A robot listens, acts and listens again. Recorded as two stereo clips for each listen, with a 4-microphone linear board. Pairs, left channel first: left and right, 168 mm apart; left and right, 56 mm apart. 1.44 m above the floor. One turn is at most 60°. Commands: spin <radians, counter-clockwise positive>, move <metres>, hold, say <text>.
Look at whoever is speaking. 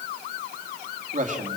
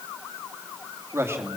spin -0.87
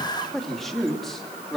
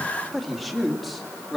say Facing the man speaking, 2 to 4 m away.